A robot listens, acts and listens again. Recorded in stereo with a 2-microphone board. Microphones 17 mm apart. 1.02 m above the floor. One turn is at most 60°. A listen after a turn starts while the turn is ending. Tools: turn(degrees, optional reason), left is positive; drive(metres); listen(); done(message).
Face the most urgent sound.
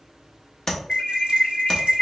turn(degrees=40, reason="The alarm: about 40° left or 140° left.")
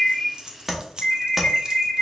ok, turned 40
turn(degrees=60, reason="So it is at 100° left.")
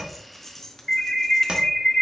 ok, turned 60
turn(degrees=30, reason="The alarm is now 30° left.")
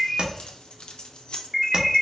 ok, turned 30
turn(degrees=-10, reason="The alarm is now 10° right.")
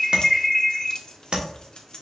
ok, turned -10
done("Facing the alarm.")